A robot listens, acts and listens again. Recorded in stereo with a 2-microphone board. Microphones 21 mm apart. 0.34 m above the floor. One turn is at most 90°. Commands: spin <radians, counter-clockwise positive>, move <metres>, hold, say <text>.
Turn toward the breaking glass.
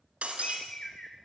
spin -1.57
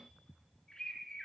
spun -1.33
spin -0.26
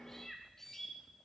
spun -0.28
say Facing where the breaking glass came from. I can't hear it now.